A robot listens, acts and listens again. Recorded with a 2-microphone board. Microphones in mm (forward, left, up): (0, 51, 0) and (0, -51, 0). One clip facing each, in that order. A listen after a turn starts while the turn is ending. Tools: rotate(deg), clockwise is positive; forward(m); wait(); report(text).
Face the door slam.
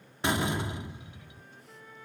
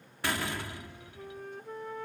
rotate(-20)
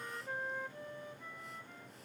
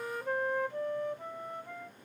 wait()
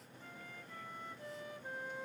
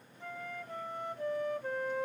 report("I heard a door slam, but can't make it out now. It was about straight ahead or 140° left.")